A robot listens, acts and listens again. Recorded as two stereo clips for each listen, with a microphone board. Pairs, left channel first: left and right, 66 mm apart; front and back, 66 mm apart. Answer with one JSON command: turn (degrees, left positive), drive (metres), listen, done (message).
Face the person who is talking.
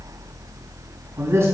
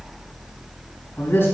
{"turn": -50}
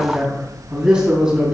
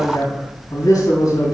{"turn": -15}
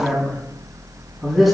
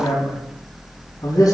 {"done": "Found it: a man speaking, straight ahead."}